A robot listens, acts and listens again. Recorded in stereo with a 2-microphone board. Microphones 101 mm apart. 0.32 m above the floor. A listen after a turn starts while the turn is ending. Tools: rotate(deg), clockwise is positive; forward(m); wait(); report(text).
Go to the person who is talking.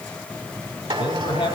rotate(-65)
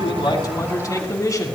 rotate(-40)
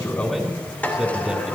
rotate(10)
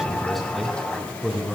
forward(1.0)
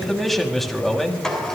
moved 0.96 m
forward(1.0)
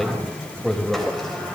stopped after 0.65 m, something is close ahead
report("I am next to the man speaking.")